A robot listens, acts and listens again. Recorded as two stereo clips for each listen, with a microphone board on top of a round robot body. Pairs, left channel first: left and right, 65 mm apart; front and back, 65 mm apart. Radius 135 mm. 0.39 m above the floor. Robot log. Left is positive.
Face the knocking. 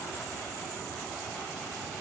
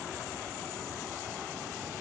cmd idle
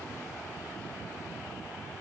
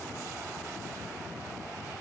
cmd idle
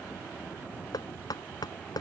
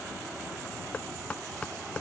note: The knocking: 70° left.
cmd yaw +70
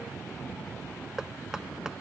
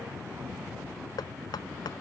note: The knocking is now 10° right.
cmd yaw -10
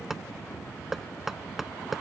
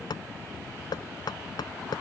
end: Facing the knocking.